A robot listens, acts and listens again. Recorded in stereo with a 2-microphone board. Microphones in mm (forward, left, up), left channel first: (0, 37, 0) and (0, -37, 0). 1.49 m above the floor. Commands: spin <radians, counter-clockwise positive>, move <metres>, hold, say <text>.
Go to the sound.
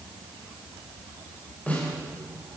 spin 0.35
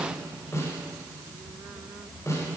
spin 2.44
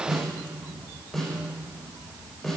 move 1.0
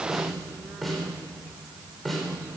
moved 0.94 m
move 1.0
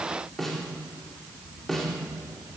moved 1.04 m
move 1.0
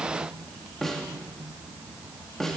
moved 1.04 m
move 1.0
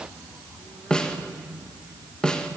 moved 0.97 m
spin 0.17
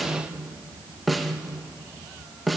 move 1.0
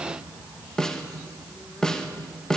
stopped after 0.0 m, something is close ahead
spin 0.17
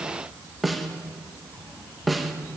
say Arrived at the snare drum, straight ahead.